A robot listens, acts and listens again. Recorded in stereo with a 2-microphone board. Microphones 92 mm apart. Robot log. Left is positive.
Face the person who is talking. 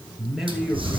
cmd yaw -30
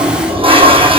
cmd idle
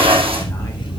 cmd idle
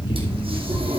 end: I heard a man speaking, but can't make it out now. It was about 25° left or 145° right.